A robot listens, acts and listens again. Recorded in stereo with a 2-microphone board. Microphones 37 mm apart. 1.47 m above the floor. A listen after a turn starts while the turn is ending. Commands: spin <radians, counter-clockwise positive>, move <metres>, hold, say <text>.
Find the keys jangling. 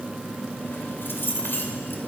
spin 1.13
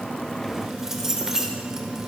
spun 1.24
spin -0.17
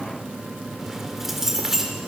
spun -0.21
spin -0.17
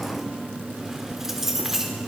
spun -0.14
spin -0.17
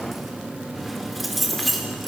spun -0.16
say Facing the keys jangling, 2 to 4 m away.